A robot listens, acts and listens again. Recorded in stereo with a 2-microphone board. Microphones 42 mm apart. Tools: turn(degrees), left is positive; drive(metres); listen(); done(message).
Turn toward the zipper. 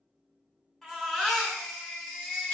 listen()
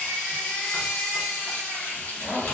turn(degrees=50)
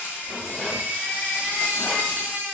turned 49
listen()
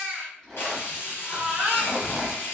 done("Found it: a zipper, straight ahead.")